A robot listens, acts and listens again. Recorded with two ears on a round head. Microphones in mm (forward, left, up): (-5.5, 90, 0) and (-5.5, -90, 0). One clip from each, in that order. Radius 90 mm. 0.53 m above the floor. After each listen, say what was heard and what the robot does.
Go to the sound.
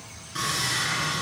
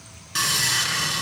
The sawing: about 70° right or 110° right. Turn 70° right.
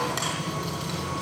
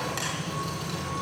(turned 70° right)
Drive 1.0 m forward.
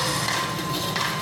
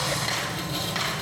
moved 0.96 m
Drive 1.0 m forward.
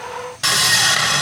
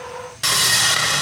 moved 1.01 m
The sawing is now 10° right. Turn 10° right.
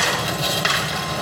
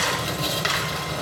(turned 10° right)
Drive 1.0 m forward.
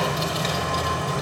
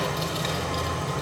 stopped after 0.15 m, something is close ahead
I am next to the sawing.